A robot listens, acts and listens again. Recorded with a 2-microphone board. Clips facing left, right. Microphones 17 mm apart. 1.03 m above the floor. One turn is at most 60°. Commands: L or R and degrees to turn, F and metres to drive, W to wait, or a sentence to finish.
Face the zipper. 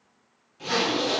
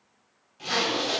R15
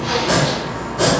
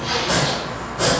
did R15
Facing the zipper, 1 to 2 m away.